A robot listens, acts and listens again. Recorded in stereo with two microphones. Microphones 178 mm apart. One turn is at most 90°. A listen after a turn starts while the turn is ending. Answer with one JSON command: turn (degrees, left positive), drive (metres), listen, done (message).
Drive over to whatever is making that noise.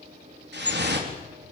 {"turn": -75}
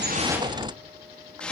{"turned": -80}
{"drive": 1.0}
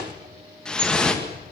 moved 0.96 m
{"drive": 1.0}
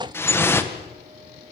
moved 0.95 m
{"turn": 10}
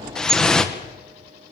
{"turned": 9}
{"drive": 1.0}
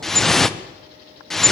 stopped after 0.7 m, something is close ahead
{"done": "Arrived at the dripping, straight ahead."}